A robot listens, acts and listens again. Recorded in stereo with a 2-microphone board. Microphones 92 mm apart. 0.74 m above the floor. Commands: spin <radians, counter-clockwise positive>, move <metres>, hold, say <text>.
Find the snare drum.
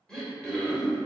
hold
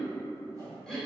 hold
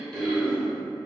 say I can't make out a snare drum to turn to.